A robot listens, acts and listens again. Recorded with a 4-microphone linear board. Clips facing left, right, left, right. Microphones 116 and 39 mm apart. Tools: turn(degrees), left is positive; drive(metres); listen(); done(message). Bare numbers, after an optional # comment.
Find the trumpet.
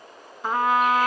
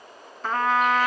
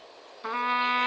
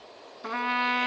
turn(30)
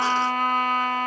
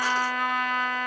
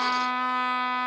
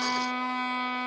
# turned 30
# So it is at 135° left.
turn(135)
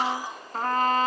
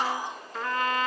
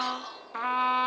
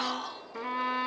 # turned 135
# The trumpet is now 50° left.
turn(50)
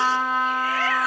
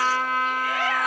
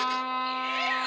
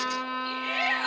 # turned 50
# The trumpet is now 20° left.
turn(20)
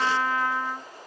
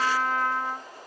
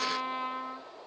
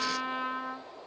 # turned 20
done("Facing the trumpet.")